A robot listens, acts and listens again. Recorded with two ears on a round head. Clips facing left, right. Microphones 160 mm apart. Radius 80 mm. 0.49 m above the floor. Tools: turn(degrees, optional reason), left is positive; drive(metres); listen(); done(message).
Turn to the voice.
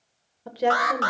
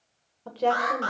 turn(degrees=30)
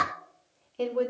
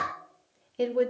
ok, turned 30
turn(degrees=-15, reason="So it is at 15° right.")
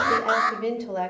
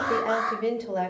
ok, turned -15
done("Facing the woman speaking, 1 to 2 m away.")